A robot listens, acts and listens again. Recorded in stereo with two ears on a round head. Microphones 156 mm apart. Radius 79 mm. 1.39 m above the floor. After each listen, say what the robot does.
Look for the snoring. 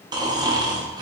Turn 25° right.
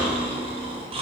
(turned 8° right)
Turn 35° right.
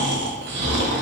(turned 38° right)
Turn 110° right.
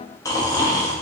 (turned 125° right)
Turn 20° left.
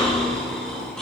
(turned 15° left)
Found it: snoring, straight ahead, under 1 m away.